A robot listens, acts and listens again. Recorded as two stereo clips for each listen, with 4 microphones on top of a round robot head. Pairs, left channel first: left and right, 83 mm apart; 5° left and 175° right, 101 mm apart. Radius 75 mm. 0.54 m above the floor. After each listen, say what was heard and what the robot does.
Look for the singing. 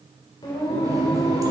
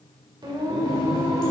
The singing: 130° left. Turn 130° left.
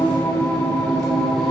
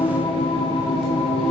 The singing is now 10° left. Turn 10° left.
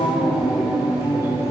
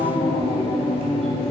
The singing is now 15° right. Turn 15° right.
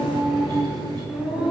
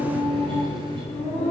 The singing is now 15° right. Turn 15° right.
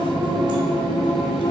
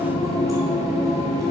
Facing the singing.